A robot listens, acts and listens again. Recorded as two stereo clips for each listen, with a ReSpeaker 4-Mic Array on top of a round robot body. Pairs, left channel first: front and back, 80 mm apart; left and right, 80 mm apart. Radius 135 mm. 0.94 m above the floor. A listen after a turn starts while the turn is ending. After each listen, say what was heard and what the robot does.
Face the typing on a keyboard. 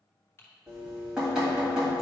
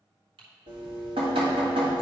The typing on a keyboard: 60° right. Turn 60° right.
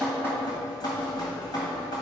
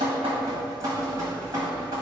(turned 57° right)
Keep listening.
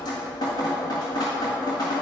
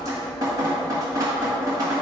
Keep listening.
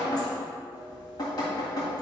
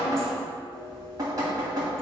I heard typing on a keyboard from this way, but can't make it out now.